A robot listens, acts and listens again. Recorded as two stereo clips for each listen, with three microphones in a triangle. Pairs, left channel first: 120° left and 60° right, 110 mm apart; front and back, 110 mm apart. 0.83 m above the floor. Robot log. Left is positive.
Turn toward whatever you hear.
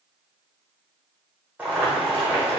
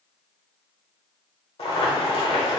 note: The boiling: 15° left.
cmd yaw +15
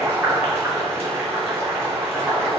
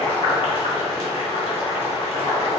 end: Found it: boiling, straight ahead, under 1 m away.